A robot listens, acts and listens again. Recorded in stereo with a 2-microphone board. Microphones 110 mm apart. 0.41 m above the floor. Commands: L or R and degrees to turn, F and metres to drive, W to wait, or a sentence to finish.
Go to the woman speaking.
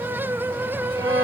W
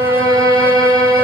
W
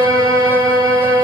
I can't make out a woman speaking, only a violin.